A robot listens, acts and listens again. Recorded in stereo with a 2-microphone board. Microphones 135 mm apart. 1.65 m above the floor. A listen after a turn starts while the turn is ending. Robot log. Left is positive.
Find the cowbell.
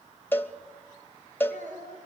note: The cowbell: about 15° left or 165° left.
cmd yaw +15
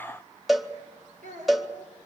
end: Found it: a cowbell, straight ahead, 1 to 2 m away.